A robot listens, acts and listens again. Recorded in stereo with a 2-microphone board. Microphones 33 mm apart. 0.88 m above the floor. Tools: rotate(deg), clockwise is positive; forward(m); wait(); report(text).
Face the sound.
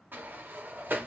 rotate(90)
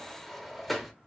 report("Found it: a sliding door, straight ahead, under 1 m away.")